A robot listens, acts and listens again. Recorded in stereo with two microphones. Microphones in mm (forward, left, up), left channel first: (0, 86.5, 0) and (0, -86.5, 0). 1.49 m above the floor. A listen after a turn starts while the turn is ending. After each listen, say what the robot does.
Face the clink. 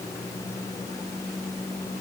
Keep listening.
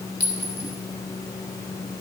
Turn 70° right.
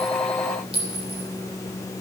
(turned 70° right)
Turn 35° right.
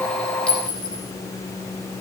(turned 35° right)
Facing the clink, 2 to 4 m away.